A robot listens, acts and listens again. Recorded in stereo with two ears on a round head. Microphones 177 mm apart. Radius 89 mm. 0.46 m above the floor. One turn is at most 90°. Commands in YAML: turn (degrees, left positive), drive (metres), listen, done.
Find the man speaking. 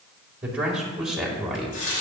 turn: 30
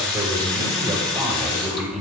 turn: 30
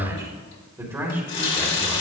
turn: -30
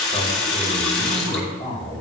turn: 30
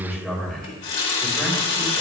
done: "Found it: a man speaking, straight ahead, 2 to 4 m away."